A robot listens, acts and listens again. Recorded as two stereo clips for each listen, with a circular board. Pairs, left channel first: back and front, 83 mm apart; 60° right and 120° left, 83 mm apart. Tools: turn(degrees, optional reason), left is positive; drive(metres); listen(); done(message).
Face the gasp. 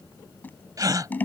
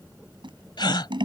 turn(degrees=-40, reason="The gasp: 40° right.")
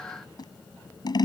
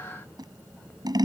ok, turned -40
done("Facing where the gasp came from. I can't hear it now.")